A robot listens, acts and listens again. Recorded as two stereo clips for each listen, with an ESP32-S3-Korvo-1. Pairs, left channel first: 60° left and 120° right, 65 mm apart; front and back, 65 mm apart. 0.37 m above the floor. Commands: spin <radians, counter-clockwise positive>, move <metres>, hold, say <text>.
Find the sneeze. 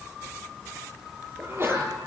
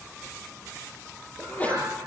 spin -1.22
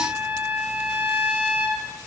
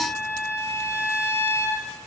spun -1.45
spin 0.26
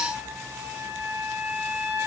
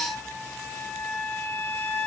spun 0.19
say Facing where the sneeze came from. I can't hear it now.